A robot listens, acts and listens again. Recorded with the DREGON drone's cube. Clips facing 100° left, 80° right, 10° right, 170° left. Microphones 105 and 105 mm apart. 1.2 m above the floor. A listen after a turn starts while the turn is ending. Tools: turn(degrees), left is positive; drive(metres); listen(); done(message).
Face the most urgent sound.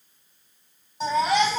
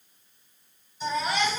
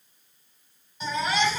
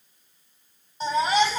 turn(degrees=115)
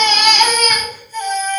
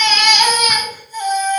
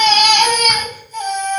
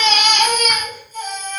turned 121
done("Found it: a baby crying, straight ahead.")